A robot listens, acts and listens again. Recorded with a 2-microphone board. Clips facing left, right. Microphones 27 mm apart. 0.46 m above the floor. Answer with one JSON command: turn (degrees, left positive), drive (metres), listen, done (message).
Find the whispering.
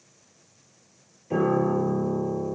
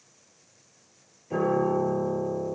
{"listen": true}
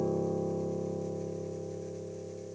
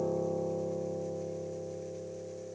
{"listen": true}
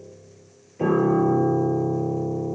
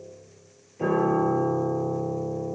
{"done": "I can't make out whispering to turn to."}